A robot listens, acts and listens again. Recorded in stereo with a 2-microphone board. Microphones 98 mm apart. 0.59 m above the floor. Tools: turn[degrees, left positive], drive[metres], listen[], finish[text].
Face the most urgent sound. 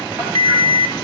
Thought: The alarm: about 60° right or 120° right.
Action: turn[-60]
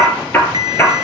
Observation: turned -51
Thought: So it is at 50° right.
Action: turn[-50]
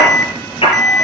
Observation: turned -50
Action: finish[Facing the alarm.]